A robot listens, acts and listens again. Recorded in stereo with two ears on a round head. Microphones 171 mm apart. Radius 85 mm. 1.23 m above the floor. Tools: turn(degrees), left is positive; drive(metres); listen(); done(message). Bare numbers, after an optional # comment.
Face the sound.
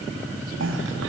# The cough: about 70° right or 110° right.
turn(-70)
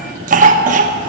# So it is at 45° right.
turn(-45)
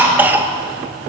# The cough is now 10° right.
turn(-10)
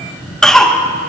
done("Found it: a cough, straight ahead.")